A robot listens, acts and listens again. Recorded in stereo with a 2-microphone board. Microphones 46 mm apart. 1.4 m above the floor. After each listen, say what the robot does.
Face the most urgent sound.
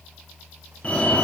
Turn 30° left.
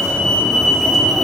Facing the fire alarm.